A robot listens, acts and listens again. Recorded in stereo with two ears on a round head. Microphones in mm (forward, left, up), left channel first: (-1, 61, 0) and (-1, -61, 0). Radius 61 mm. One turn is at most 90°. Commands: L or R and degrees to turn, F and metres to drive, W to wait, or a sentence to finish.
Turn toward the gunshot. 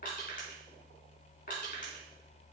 W
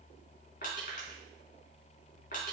W
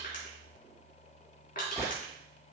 L25
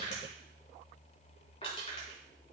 W
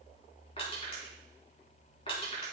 I heard a gunshot, but can't make it out now. It was about straight ahead or 130° left.